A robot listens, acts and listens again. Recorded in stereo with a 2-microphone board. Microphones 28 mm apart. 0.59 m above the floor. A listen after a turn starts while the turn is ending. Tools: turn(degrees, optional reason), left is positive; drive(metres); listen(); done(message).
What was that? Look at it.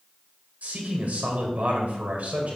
turn(degrees=-70, reason="The man speaking: about 70° right or 110° right.")
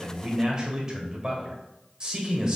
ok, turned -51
turn(degrees=-30, reason="So it is at 30° right.")
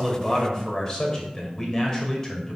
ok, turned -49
turn(degrees=20, reason="The man speaking is now 20° left.")
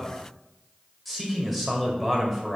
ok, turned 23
done("Facing the man speaking.")